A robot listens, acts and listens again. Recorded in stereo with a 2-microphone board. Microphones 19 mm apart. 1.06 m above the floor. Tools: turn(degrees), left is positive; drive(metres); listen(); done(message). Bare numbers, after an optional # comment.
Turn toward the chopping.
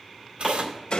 turn(-30)
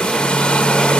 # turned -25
listen()
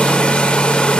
listen()
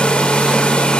done("I heard chopping, but can't make it out now. It was about 15° left or 145° right.")